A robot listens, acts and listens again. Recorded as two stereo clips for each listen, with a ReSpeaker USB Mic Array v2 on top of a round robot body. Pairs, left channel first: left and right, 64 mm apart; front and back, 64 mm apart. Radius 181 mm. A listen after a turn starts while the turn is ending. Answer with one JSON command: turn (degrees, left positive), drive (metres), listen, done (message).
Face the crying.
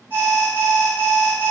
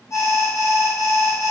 {"listen": true}
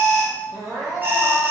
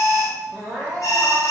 {"turn": -85}
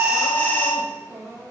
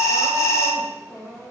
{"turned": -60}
{"turn": -25}
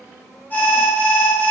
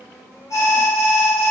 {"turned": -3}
{"turn": -20}
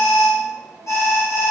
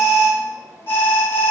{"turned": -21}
{"listen": true}
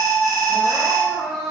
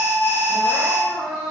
{"done": "Found it: crying, straight ahead, 1 to 2 m away."}